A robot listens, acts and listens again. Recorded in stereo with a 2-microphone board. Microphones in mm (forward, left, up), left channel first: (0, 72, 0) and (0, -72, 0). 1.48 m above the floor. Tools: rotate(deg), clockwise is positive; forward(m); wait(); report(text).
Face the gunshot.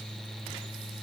wait()
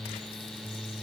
wait()
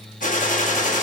rotate(-65)
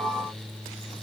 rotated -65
wait()
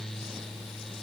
report("I heard a gunshot, but can't make it out now. It was about straight ahead or 50° left.")